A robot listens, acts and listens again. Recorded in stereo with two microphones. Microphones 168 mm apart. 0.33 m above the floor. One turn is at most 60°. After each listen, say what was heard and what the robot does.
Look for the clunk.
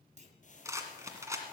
The clunk: about 45° right or 135° right. Turn 45° right.
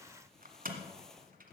Keep listening.
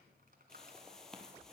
I heard a clunk, but can't make it out now. It was about straight ahead or 90° right.